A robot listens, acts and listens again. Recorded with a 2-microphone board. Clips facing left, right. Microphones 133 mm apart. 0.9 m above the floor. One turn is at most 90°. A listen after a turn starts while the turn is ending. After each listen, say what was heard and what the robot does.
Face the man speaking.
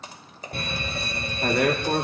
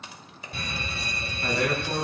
Turn 90° left.
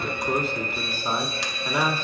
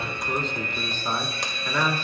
So it is at 20° left. Turn 20° left.
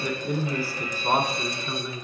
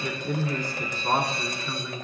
The man speaking is now 20° left. Turn 20° left.
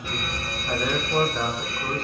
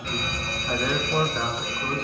Facing the man speaking, 2 to 4 m away.